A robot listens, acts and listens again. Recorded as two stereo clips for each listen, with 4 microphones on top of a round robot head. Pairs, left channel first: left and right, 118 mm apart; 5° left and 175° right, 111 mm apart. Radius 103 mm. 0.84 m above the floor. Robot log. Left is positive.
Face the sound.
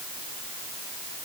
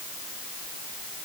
cmd idle
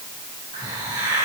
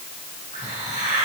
note: The hiss: 150° right.
cmd yaw -150
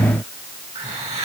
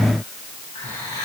note: The hiss is now 60° right.
cmd yaw -60
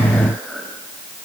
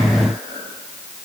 note: The hiss is now 10° right.
cmd yaw -10
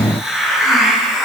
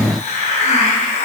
end: Facing the hiss.